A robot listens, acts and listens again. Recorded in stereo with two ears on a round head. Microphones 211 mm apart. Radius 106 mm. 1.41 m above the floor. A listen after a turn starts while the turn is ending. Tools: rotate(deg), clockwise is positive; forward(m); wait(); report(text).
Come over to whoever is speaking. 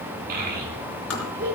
rotate(40)
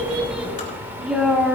forward(1.0)
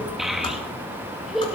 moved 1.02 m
forward(1.0)
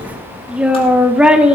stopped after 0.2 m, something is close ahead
report("I am next to the child speaking.")